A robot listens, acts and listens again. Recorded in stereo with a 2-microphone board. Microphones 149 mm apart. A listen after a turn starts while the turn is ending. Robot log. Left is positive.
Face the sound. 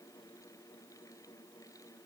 cmd idle
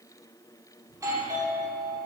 note: The doorbell: about 20° right or 160° right.
cmd yaw -20
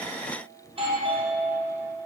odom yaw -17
note: So it is at 140° right.
cmd yaw -140
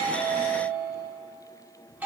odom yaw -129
note: The doorbell is now 10° right.
cmd yaw -10
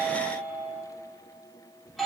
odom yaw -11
end: Facing the doorbell, 2 to 4 m away.